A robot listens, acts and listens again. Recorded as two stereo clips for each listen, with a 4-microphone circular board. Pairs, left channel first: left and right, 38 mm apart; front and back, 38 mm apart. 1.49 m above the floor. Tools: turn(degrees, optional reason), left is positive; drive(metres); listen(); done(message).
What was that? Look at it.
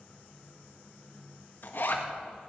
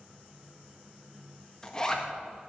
turn(degrees=70, reason="The zipper: 70° left.")
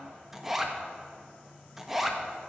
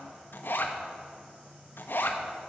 done("Found it: a zipper, straight ahead, 1 to 2 m away.")